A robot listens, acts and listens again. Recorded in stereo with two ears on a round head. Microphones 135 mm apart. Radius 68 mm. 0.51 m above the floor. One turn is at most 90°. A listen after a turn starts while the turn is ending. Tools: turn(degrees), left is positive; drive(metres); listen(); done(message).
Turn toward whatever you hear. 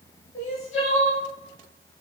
turn(degrees=50)
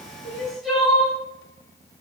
done("Found it: crying, straight ahead, under 1 m away.")